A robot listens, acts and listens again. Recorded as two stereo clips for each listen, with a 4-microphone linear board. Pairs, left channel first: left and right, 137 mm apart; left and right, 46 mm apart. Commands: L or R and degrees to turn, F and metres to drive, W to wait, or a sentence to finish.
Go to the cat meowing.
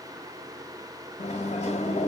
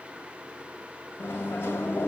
W
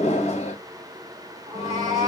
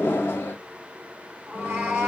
R30
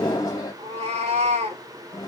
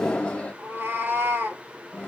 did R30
R115
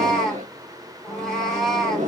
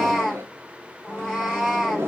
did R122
F1.0
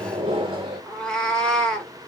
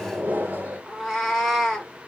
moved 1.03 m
L10
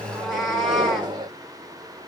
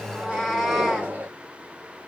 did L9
F1.0
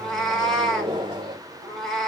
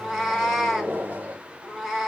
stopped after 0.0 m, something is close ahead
Arrived at the cat meowing, straight ahead.